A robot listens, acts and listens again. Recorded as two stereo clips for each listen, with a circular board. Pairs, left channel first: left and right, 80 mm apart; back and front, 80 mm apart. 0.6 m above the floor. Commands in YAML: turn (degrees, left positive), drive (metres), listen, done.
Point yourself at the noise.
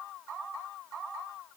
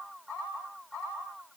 listen: true
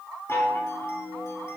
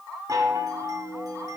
turn: 35
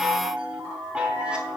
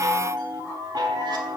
turn: -15
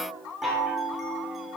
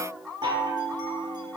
done: "Facing the chime, 1 to 2 m away."